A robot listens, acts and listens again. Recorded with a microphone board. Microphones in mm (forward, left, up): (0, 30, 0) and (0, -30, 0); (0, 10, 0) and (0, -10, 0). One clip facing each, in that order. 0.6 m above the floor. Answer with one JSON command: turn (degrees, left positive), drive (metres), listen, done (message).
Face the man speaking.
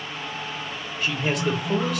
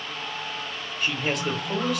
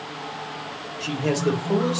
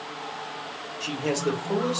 {"turn": 30}
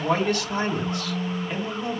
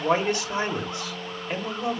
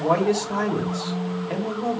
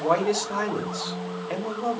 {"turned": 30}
{"turn": -25}
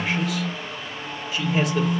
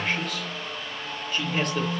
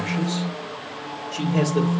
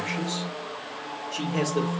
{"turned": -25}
{"done": "Found it: a man speaking, straight ahead."}